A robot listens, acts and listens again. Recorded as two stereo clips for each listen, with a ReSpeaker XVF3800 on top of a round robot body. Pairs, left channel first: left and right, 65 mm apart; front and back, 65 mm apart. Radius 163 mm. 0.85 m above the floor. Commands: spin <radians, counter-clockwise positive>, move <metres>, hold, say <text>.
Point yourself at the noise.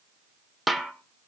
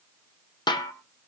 say Found it: a snare drum, straight ahead, 1 to 2 m away.